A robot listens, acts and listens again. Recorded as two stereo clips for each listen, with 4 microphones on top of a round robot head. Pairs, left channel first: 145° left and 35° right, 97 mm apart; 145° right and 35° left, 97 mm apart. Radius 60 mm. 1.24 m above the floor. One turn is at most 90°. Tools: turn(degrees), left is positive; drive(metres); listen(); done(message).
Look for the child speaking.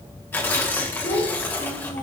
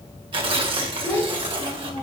turn(degrees=90)
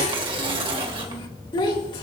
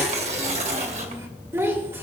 turn(degrees=90)
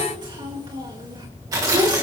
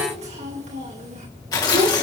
turn(degrees=15)
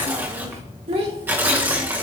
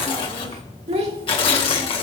done("Facing the child speaking.")